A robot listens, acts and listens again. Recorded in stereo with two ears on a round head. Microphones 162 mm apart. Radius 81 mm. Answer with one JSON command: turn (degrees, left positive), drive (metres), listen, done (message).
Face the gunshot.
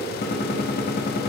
{"turn": 50}
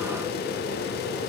{"listen": true}
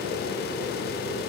{"done": "I heard a gunshot, but can't make it out now. It was about straight ahead or 80° left."}